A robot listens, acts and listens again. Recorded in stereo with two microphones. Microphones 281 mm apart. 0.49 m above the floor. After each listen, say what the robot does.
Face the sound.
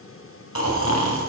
Turn 75° left.
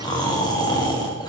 Turn 15° left.
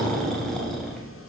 Found it: snoring, straight ahead, 2 to 4 m away.